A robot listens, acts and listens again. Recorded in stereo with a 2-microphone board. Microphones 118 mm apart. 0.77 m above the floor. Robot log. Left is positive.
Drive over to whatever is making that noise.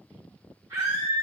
note: The scream: about 30° right or 150° right.
cmd yaw -30
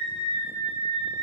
note: So it is at 120° right.
cmd yaw -120
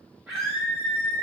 note: The scream is now 25° right.
cmd yaw -25
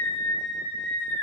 cmd fwd 1.0
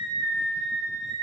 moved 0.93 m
note: The scream is now 10° right.
cmd yaw -10
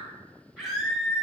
cmd fwd 1.0
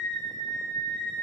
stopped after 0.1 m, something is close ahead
note: The scream is now 10° left.
cmd yaw +10
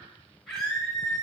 end: I am next to the scream.